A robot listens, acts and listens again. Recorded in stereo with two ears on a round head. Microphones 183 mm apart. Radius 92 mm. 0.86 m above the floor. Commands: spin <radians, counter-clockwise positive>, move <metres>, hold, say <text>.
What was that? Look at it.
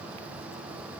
hold
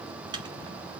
spin -0.35
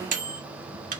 spin -2.36
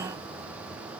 hold
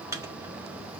spin -0.26
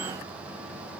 hold
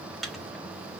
say Facing the microwave, 1 to 2 m away.